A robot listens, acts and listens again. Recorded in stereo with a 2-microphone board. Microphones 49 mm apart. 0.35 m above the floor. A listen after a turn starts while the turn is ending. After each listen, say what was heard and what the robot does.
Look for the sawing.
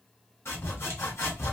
The sawing: about 60° left or 120° left. Turn 60° left.
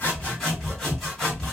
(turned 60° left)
Facing the sawing.